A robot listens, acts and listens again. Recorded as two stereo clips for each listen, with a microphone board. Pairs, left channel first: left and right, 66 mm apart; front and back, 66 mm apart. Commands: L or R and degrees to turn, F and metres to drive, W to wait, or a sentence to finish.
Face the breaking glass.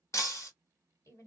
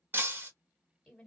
L125
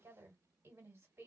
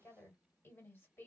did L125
Facing where the breaking glass came from. I can't hear it now.